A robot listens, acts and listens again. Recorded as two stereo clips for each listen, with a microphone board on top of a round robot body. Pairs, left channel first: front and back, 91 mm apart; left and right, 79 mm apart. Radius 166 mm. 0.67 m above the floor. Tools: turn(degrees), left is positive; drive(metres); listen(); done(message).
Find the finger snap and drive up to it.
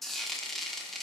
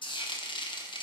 listen()
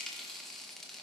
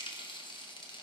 listen()
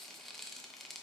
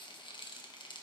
done("I can't make out a finger snap to turn to.")